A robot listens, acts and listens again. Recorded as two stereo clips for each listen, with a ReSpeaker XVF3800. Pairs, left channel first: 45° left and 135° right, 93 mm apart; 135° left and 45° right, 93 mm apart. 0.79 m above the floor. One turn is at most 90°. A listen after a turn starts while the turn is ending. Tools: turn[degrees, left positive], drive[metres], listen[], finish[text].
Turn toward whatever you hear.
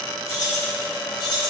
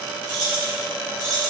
Thought: The keys jangling: 90° left.
Action: turn[90]
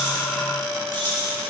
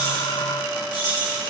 Thought: The keys jangling is now 25° right.
Action: turn[-25]
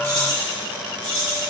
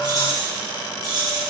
Thought: The keys jangling is now 10° right.
Action: turn[-10]
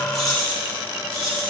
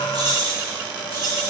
Action: finish[Found it: keys jangling, straight ahead, over 4 m away.]